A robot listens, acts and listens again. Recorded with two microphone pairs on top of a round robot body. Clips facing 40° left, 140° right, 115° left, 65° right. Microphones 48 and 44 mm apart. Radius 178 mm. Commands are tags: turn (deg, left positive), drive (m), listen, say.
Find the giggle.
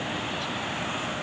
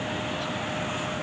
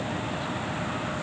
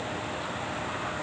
<listen/>
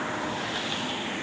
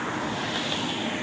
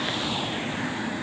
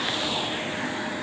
<listen/>
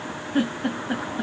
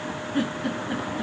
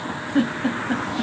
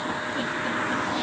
<turn deg="90"/>
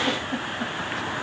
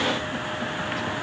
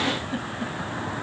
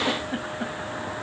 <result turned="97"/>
<listen/>
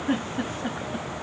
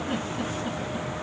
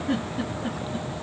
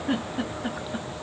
<say>Found it: a giggle, straight ahead, 2 to 4 m away.</say>